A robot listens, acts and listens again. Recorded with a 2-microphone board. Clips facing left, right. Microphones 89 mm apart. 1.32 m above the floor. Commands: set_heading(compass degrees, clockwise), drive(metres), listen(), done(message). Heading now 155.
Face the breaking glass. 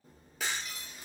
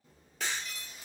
set_heading(125)
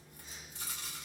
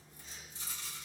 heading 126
listen()
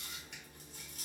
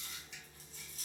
done("I heard breaking glass, but can't make it out now. It was about 25° right or 145° left.")